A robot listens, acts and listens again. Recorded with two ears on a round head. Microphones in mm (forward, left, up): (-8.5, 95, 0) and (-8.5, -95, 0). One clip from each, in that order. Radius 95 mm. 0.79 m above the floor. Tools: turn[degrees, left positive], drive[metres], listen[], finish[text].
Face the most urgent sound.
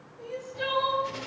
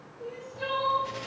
Thought: The crying: about 60° left or 120° left.
Action: turn[60]
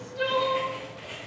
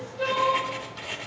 Thought: So it is at 60° left.
Action: turn[60]
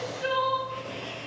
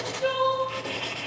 Thought: The crying is now 20° left.
Action: turn[20]
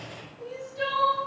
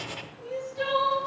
Action: finish[Facing the crying, 1 to 2 m away.]